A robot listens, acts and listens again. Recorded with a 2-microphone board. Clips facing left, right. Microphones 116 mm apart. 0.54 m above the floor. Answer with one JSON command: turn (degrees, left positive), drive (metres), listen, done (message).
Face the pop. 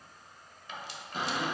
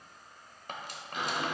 {"listen": true}
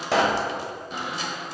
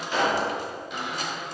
{"turn": 90}
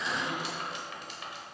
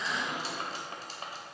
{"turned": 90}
{"done": "Facing where the pop came from. I can't hear it now."}